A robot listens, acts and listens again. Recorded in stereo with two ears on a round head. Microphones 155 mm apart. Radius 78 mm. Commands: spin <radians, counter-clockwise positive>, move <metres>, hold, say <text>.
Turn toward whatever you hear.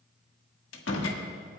spin 1.57
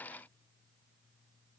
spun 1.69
say Facing where the door slam came from. I can't hear it now.